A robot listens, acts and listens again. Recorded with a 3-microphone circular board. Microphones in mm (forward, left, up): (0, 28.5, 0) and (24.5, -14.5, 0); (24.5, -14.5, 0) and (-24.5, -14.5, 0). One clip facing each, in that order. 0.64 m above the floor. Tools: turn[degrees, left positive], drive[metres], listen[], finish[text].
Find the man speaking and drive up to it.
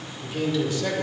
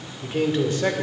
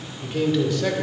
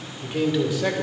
Thought: The man speaking: 100° right.
Action: turn[-100]
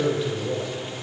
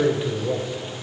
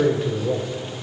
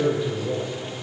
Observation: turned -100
Action: drive[1.0]
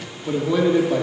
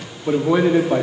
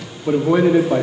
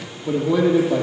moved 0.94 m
Thought: The man speaking is now 15° right.
Action: turn[-15]
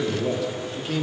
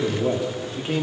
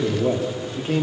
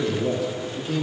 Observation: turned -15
Action: drive[1.0]
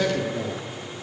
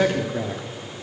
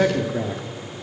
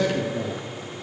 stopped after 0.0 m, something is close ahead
Action: finish[Arrived at the man speaking, straight ahead.]